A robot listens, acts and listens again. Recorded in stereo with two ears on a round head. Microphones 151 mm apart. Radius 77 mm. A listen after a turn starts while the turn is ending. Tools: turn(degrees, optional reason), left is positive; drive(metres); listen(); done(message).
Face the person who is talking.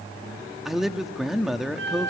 turn(degrees=30)
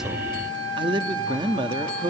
turn(degrees=-30, reason="So it is at 30° right.")
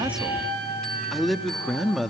done("Found it: a man speaking, straight ahead.")